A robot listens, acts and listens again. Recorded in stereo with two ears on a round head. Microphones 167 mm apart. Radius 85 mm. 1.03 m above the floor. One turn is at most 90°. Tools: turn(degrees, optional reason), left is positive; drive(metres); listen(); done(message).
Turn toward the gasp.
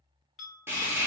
listen()
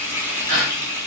turn(degrees=-90)
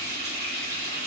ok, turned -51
turn(degrees=-40, reason="Nothing new. It was at 40° right.")
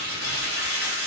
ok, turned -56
turn(degrees=15, reason="Nothing new. It was at 15° left.")
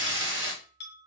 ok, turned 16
done("Facing where the gasp came from. I can't hear it now.")